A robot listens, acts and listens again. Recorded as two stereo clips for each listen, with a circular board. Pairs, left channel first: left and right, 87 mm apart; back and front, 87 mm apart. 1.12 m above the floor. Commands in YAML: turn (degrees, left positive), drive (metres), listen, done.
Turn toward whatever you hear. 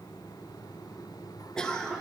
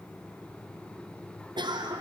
turn: 10
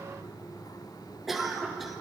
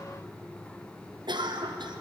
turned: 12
done: "Found it: a cough, straight ahead."